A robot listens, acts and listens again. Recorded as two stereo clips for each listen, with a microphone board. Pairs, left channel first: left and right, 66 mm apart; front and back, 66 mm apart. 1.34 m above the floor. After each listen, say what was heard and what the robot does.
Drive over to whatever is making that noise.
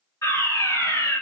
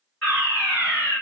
The fire alarm: 75° left. Turn 75° left.
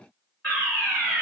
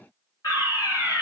The fire alarm is now 25° left. Turn 25° left.
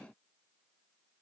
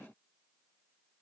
Keep listening.
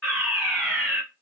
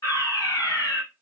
The fire alarm is now 15° left. Turn 15° left.
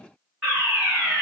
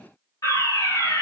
Drive 1.0 m forward.
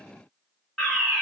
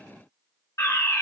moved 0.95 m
Drive 1.0 m forward.
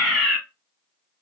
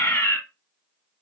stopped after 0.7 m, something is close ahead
Arrived at the fire alarm, straight ahead.